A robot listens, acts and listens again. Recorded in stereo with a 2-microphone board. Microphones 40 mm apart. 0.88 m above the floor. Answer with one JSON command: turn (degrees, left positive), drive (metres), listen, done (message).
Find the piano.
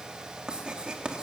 {"listen": true}
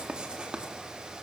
{"listen": true}
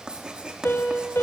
{"turn": 90}
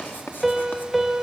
{"done": "Facing the piano."}